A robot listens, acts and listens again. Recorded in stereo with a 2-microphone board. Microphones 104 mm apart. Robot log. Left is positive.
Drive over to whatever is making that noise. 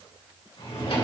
note: The drawer: about 65° left or 115° left.
cmd yaw +65
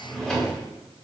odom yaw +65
cmd fwd 1.0
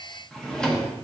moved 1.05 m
cmd fwd 1.0
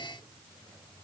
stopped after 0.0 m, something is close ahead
cmd idle
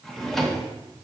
end: I am next to the drawer.